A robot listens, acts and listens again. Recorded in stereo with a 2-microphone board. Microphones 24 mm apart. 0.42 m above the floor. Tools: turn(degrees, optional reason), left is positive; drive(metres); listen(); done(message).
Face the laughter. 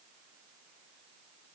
listen()
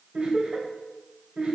turn(degrees=-45, reason="The laughter: about 45° right or 135° right.")
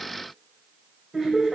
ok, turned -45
turn(degrees=-15, reason="So it is at 15° right.")
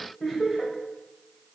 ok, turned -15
done("Found it: laughter, straight ahead.")